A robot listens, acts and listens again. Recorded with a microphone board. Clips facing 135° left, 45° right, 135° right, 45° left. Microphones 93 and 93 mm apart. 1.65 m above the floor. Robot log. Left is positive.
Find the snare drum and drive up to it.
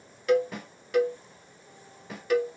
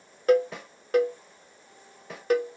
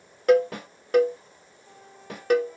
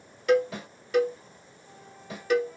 note: The snare drum: 140° right.
cmd yaw -140
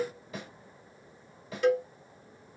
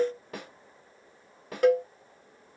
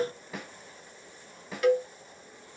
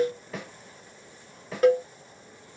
note: The snare drum is now 50° right.
cmd yaw -50
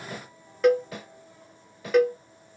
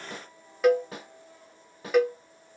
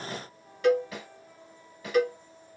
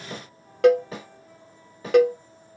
cmd fwd 1.0
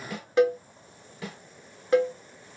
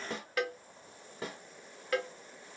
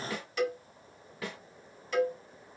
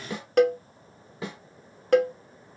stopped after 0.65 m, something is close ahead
note: The snare drum is now 10° right.
cmd yaw -10
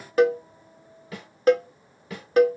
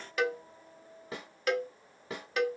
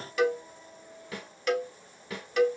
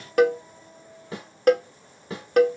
end: Arrived at the snare drum, straight ahead.